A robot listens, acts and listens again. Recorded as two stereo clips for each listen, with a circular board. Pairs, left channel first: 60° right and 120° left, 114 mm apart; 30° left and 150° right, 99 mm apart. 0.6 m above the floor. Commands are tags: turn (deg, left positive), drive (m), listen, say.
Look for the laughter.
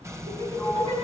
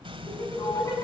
<turn deg="90"/>
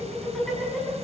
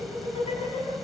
<turn deg="25"/>
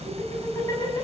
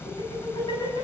<say>Found it: laughter, straight ahead, over 4 m away.</say>